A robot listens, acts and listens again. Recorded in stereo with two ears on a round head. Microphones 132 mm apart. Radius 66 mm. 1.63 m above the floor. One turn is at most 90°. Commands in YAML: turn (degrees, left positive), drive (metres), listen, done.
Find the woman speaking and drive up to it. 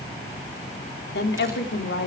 turn: 90
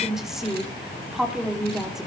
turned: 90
drive: 1.0
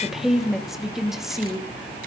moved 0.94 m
drive: 1.0
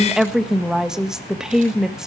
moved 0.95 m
drive: 1.0
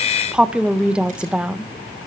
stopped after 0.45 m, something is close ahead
done: "I am next to the woman speaking."